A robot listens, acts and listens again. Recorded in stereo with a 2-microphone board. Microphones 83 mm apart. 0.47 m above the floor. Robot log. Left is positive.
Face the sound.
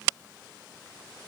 cmd idle
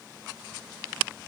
cmd idle
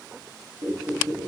note: The squeak: about 55° right or 125° right.
cmd yaw -55
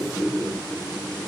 end: Facing the squeak, 2 to 4 m away.